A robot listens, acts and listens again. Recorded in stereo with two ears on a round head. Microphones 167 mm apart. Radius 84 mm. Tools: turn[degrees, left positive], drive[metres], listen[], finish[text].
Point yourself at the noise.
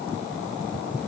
Action: listen[]
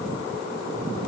Action: listen[]
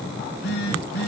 Thought: The phone buzzing: about 65° left or 115° left.
Action: turn[65]
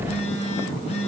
Thought: So it is at 40° left.
Action: turn[40]
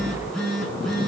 Action: finish[Facing the phone buzzing, 2 to 4 m away.]